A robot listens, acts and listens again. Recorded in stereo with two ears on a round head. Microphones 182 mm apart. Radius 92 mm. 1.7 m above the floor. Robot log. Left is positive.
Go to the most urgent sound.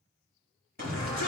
note: The shout: about 45° right or 135° right.
cmd yaw -45
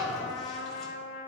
cmd fwd 1.0
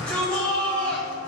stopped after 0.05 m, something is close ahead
end: Something is in my way. I am facing the shout but have not reached it.